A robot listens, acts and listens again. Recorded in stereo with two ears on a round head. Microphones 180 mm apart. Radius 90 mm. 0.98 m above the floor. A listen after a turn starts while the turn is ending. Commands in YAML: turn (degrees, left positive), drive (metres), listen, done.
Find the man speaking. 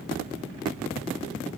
listen: true
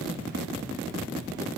listen: true
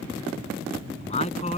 turn: 30
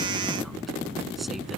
listen: true
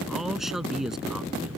done: "Facing the man speaking."